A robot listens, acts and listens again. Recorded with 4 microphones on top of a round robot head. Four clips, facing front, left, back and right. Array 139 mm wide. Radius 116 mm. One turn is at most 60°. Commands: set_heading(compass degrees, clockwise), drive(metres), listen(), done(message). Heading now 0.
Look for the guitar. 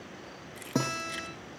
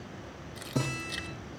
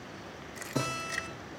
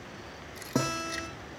set_heading(55)
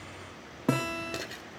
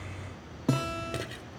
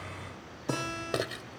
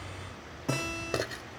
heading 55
set_heading(35)
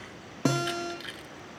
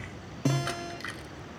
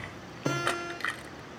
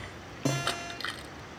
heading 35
done("Facing the guitar, over 4 m away.")